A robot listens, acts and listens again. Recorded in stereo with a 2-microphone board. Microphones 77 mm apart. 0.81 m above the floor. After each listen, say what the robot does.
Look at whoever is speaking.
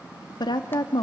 Turn 70° left.
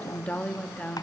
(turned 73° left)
Turn 20° left.
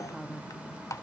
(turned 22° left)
Facing the woman speaking, 1 to 2 m away.